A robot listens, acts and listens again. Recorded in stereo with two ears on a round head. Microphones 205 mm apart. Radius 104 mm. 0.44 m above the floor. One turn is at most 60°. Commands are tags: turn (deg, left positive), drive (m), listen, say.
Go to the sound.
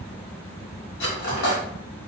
<turn deg="55"/>
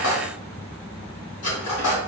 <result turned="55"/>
<turn deg="60"/>
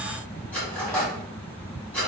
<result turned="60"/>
<drive m="1.0"/>
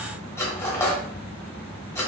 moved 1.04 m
<turn deg="10"/>
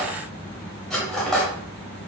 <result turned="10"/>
<drive m="1.0"/>
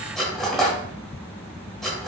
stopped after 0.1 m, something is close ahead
<say>Arrived at the cutlery clinking, straight ahead.</say>